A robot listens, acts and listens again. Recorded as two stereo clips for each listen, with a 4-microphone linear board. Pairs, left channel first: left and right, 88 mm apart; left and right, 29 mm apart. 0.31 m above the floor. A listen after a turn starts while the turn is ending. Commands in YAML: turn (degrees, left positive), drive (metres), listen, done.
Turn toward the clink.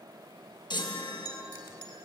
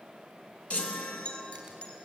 turn: 55
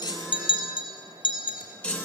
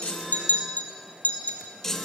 turn: 70
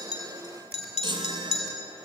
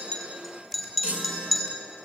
done: "Facing the clink, over 4 m away."